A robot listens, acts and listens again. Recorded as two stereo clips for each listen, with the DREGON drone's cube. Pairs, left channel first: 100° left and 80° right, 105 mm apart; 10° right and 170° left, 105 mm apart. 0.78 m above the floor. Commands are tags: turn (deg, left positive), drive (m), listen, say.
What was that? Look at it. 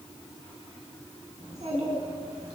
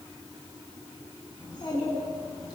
<turn deg="-60"/>
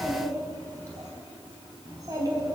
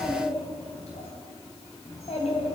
<turn deg="-25"/>
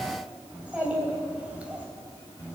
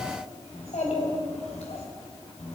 <say>Found it: a child speaking, straight ahead, 2 to 4 m away.</say>